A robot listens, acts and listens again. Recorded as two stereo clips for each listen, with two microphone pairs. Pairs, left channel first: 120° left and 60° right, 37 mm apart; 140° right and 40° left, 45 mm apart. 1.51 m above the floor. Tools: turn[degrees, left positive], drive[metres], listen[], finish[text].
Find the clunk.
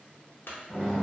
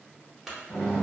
Thought: The clunk: 120° left.
Action: turn[120]
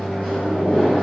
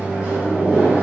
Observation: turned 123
Action: finish[I heard a clunk from this way, but can't make it out now.]